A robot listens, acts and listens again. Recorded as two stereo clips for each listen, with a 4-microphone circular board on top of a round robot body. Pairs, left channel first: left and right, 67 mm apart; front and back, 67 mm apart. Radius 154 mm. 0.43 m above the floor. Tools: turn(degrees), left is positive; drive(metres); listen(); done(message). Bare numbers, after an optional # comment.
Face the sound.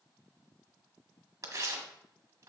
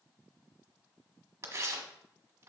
# The tearing paper: 130° right.
turn(-130)
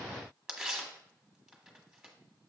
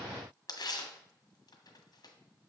done("Facing the tearing paper.")